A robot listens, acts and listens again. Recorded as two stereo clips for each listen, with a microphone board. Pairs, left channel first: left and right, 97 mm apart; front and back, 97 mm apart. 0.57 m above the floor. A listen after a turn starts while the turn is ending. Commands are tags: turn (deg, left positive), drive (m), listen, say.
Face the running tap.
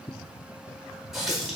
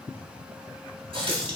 <turn deg="180"/>
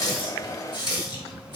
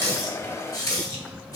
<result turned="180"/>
<turn deg="50"/>
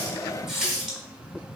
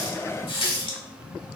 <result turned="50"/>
<say>Found it: a running tap, straight ahead, 1 to 2 m away.</say>